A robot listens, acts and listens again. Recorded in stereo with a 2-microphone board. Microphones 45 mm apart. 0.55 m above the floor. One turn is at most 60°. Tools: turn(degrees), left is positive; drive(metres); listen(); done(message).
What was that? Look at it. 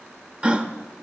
turn(degrees=-25)
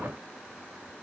listen()
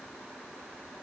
done("I heard a gasp, but can't make it out now. It was about straight ahead or 130° right.")